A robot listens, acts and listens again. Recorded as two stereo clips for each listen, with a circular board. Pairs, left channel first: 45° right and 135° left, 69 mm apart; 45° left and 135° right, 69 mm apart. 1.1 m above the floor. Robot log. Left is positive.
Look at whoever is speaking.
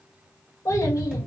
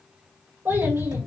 note: The child speaking: 80° right.
cmd yaw -80
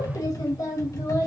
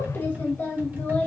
note: The child speaking is now 15° right.
cmd yaw -15
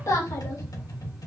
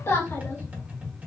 end: Found it: a child speaking, straight ahead.